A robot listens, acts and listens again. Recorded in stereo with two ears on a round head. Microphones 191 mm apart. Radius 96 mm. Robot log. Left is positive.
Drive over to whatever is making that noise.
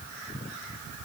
cmd idle
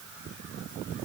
cmd idle
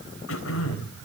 note: The throat clearing: about 70° left or 110° left.
cmd yaw +70
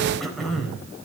cmd fwd 1.0
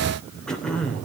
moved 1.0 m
cmd fwd 1.0
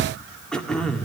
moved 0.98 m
cmd fwd 1.0
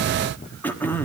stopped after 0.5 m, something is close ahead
note: The throat clearing is now 10° left.
cmd yaw +10
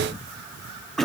end: Arrived at the throat clearing, straight ahead.